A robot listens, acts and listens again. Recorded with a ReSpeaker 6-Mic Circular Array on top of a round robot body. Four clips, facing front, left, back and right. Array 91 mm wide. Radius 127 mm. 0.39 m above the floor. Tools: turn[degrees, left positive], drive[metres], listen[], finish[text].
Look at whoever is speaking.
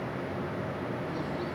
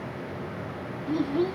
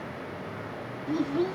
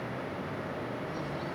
Thought: The child speaking: 130° left.
Action: turn[130]
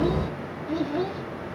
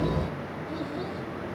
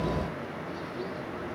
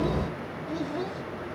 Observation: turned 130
Thought: The child speaking is now 10° right.
Action: turn[-10]
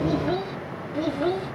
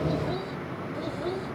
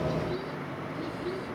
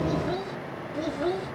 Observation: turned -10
Thought: The child speaking is now 20° right.
Action: turn[-20]
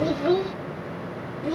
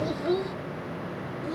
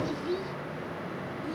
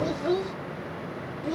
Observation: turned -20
Thought: The child speaking is now 25° right.
Action: turn[-25]
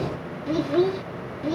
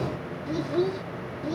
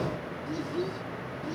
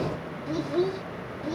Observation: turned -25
Action: finish[Facing the child speaking.]